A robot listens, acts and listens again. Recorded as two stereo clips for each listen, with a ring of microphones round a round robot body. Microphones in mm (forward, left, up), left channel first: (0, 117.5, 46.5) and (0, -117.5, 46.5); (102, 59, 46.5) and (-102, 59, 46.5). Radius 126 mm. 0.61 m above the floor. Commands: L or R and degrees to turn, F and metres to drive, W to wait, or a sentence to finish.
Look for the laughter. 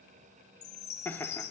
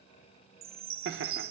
L170
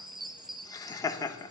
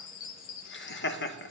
L15
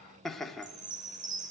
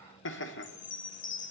Facing the laughter, 1 to 2 m away.